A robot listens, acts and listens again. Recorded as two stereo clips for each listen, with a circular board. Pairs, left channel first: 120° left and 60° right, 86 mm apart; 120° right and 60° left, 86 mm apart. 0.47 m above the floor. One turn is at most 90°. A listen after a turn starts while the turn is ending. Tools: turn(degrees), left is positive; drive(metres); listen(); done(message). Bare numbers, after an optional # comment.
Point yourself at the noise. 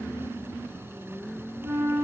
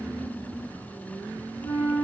# The flute: 125° right.
turn(-90)
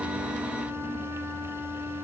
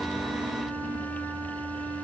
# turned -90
# The flute is now 35° right.
turn(-35)
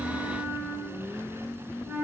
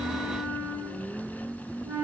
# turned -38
done("Found it: a flute, straight ahead, under 1 m away.")